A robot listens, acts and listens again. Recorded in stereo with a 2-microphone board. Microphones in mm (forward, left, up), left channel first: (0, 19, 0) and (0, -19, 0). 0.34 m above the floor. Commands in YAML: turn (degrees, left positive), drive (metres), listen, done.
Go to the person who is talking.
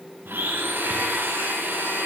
listen: true
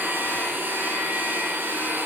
listen: true
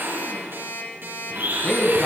turn: 30
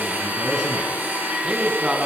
turn: -30
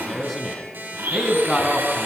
drive: 1.0
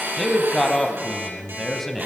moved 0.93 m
drive: 1.0
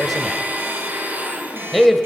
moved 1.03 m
drive: 1.0
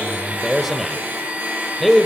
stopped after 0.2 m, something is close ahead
done: "Arrived at the man speaking, straight ahead."